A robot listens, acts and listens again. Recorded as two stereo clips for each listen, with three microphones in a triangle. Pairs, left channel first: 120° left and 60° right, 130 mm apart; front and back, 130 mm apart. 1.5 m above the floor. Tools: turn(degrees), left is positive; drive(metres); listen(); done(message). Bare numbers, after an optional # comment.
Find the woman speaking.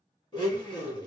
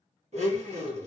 listen()
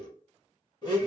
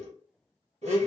listen()
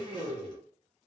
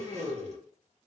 done("I can't make out a woman speaking, only a blender.")